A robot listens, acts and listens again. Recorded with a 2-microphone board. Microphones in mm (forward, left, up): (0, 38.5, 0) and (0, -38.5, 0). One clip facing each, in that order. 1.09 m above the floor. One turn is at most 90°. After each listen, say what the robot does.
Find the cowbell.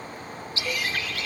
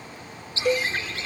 Turn 75° right.
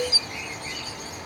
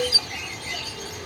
Facing the cowbell.